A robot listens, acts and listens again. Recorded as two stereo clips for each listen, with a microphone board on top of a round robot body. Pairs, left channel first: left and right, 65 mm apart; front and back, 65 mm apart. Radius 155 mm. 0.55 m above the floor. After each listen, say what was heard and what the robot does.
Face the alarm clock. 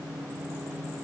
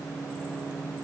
Keep listening.
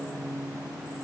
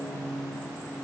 Keep listening.
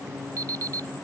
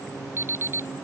The alarm clock: 130° right. Turn 130° right.
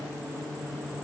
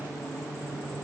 Keep listening.
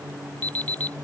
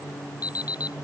The alarm clock is now 20° left. Turn 20° left.
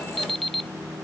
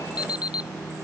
Facing the alarm clock.